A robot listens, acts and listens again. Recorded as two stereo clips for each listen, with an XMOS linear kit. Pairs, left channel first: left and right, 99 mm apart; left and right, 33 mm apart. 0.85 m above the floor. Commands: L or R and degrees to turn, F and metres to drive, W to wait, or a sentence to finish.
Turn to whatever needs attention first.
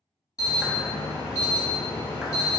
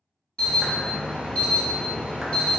L35
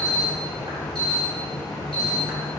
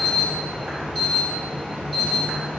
Facing the alarm.